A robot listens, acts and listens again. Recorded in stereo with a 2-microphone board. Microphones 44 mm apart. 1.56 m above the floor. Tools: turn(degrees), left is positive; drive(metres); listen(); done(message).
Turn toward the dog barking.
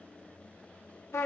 listen()
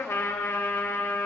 listen()
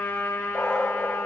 turn(degrees=30)
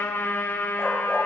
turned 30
listen()
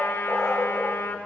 done("Facing the dog barking.")